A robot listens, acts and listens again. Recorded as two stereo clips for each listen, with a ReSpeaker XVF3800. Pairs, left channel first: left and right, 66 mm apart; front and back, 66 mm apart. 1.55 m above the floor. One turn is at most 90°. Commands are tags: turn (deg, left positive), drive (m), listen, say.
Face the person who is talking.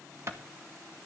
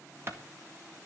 <listen/>
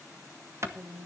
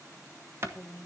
<turn deg="-55"/>
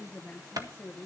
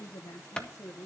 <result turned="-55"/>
<turn deg="30"/>
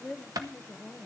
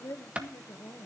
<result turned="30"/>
<turn deg="15"/>
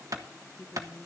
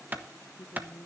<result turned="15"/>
<turn deg="20"/>
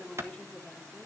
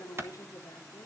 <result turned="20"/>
<turn deg="10"/>
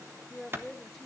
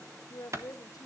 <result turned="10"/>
<say>Found it: a woman speaking, straight ahead.</say>